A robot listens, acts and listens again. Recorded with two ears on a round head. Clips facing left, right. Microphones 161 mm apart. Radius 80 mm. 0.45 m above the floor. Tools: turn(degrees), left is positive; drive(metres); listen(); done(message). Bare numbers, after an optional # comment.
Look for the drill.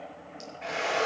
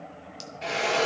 # The drill: about 45° right or 135° right.
turn(-45)
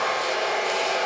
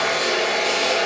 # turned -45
# So it is at 90° right.
turn(-90)
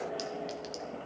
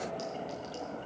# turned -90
listen()
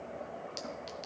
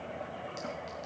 listen()
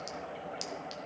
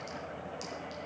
done("I heard a drill from this way, but can't make it out now.")